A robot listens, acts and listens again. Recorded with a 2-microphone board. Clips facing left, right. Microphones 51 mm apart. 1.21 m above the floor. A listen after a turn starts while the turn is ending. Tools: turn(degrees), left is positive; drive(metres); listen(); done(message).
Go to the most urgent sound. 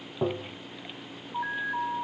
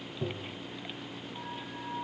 turn(degrees=70)
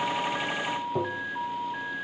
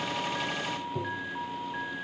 drive(metres=1.0)
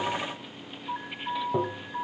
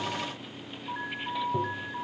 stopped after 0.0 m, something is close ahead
done("Blocked. The alarm is further on, straight ahead.")